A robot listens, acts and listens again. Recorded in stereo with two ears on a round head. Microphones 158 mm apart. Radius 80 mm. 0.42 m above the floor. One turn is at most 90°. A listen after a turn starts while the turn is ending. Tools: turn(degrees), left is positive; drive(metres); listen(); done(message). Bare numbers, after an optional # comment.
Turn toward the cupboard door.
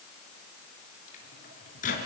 listen()
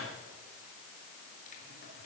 listen()
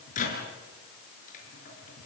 done("I can't make out a cupboard door to turn to.")